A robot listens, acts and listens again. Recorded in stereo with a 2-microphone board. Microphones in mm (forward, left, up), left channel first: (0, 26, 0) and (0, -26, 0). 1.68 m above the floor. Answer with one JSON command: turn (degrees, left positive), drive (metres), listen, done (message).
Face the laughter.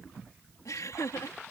{"turn": 90}
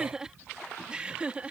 {"turn": -25}
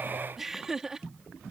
{"turn": -10}
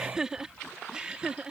{"turn": -20}
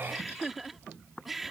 {"done": "Facing the laughter."}